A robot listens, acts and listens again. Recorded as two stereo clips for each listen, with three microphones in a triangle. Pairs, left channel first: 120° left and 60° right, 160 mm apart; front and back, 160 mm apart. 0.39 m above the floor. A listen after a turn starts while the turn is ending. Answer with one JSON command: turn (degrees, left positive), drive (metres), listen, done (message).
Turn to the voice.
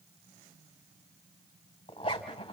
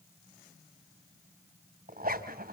{"listen": true}
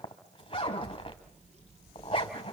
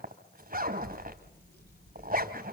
{"turn": -15}
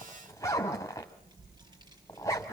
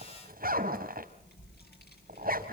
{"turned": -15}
{"done": "Facing the child speaking."}